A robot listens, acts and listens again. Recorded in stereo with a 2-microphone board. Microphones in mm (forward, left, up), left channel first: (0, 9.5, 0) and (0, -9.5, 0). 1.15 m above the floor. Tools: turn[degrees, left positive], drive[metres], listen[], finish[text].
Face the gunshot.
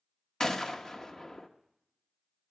Thought: The gunshot: about 30° left or 150° left.
Action: turn[30]
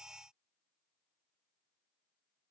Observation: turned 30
Action: listen[]
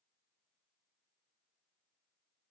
Action: finish[I heard a gunshot, but can't make it out now. It was about straight ahead or 120° left.]